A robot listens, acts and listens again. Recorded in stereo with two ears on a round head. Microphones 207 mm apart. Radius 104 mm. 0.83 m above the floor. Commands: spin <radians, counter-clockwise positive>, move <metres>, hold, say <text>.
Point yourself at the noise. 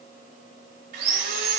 spin -0.70
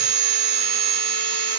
spin -1.83
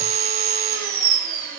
spin -0.70
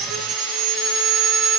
say Found it: sawing, straight ahead, 1 to 2 m away.